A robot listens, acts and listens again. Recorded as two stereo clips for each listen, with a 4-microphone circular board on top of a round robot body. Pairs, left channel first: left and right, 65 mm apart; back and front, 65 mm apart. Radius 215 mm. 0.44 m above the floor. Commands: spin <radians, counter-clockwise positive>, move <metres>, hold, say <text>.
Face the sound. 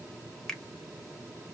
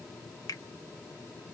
spin 2.97
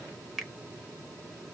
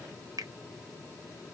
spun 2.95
say Found it: a finger snap, straight ahead, 1 to 2 m away.